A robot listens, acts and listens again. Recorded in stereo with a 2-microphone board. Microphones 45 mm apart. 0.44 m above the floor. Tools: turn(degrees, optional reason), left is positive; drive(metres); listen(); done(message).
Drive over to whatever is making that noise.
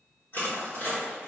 turn(degrees=60, reason="The crushing: about 60° left or 120° left.")
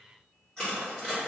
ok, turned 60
turn(degrees=15, reason="So it is at 15° left.")
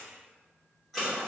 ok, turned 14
drive(metres=1.0)
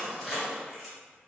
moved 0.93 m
drive(metres=1.0)
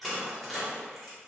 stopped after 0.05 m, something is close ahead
done("I am next to the crushing.")